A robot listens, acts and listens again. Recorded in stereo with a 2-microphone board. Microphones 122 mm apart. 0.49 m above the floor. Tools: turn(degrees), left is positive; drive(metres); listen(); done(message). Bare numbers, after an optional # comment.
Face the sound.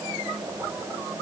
listen()
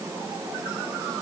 listen()
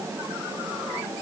done("I can't make out anything to turn to.")